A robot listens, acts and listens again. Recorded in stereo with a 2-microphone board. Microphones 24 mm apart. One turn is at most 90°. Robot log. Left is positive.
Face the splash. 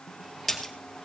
cmd yaw +30
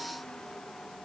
cmd idle
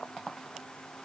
end: I heard a splash, but can't make it out now. It was about 25° right or 145° left.